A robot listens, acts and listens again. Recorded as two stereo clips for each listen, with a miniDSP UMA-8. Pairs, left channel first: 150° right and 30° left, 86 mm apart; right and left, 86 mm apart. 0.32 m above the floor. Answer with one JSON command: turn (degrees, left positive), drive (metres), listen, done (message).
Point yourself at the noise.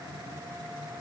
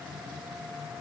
{"listen": true}
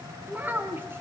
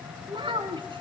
{"turn": 95}
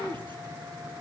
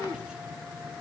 {"turn": 10}
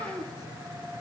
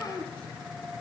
{"done": "Facing the child speaking, 2 to 4 m away."}